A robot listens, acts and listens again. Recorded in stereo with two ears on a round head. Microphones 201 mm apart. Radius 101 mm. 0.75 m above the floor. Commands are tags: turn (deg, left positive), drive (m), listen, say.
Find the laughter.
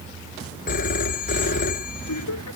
<turn deg="90"/>
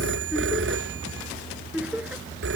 <say>Found it: laughter, straight ahead.</say>